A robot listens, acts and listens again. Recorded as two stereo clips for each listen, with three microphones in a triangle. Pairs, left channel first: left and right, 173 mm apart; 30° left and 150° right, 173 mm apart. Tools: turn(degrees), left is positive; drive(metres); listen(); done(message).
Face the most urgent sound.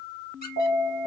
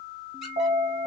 turn(degrees=-110)
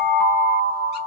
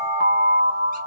turn(degrees=20)
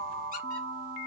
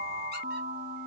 listen()
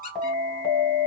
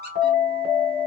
done("Found it: an alarm, straight ahead, 2 to 4 m away.")